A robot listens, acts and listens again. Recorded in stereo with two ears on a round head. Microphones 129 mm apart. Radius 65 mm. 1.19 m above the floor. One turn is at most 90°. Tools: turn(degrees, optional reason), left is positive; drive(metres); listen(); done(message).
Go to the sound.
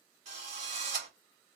turn(degrees=-45, reason="The drill: about 45° right or 135° right.")
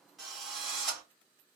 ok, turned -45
drive(metres=1.0)
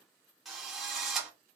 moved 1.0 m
drive(metres=1.0)
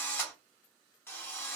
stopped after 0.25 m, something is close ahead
turn(degrees=15, reason="The drill is now 15° left.")
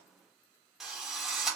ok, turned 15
done("I am next to the drill.")